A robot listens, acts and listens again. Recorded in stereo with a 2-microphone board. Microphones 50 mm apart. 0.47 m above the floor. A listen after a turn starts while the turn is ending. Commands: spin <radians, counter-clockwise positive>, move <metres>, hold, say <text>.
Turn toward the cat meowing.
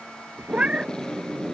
spin -0.35
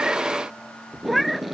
say Found it: a cat meowing, straight ahead.